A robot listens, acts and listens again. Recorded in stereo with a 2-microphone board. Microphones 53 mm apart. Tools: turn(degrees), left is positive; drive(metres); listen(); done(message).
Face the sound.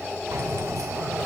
turn(degrees=-90)
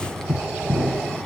turn(degrees=10)
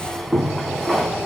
done("Found it: keys jangling, straight ahead, 2 to 4 m away.")